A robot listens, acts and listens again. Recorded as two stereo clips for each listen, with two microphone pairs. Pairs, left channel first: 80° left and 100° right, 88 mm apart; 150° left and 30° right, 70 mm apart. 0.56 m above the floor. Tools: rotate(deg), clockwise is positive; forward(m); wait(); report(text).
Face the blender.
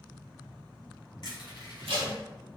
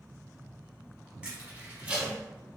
wait()
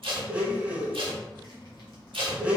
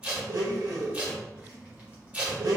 rotate(25)
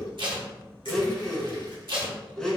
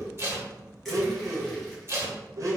report("Facing the blender, under 1 m away.")